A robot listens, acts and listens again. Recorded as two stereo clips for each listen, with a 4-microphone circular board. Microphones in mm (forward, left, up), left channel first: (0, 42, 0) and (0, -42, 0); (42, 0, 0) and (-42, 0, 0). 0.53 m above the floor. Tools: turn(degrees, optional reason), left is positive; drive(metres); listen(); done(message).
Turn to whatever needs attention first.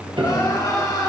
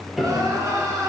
turn(degrees=130, reason="The crying: 130° left.")
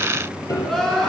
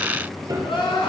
done("Found it: crying, straight ahead, 2 to 4 m away.")